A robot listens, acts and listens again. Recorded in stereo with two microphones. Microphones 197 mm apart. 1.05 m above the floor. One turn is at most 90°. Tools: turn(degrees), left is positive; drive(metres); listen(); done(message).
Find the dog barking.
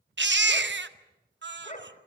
turn(degrees=40)
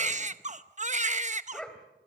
done("Found it: a dog barking, straight ahead, 2 to 4 m away.")